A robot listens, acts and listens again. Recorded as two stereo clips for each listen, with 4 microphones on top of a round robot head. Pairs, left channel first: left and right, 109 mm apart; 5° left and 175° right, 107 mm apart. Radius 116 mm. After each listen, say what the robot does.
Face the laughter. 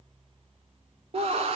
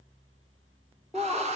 Turn 95° right.
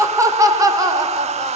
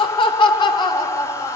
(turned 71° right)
Turn 40° right.
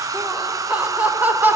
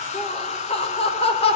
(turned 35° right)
Turn 15° right.
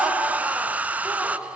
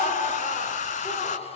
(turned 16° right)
Facing the laughter.